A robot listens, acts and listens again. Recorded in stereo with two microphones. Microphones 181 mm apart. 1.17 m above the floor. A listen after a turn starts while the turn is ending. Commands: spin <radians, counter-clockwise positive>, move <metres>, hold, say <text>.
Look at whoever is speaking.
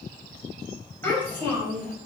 spin 0.52
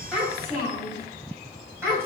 spin -0.17
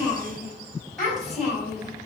say Found it: a child speaking, straight ahead, over 4 m away.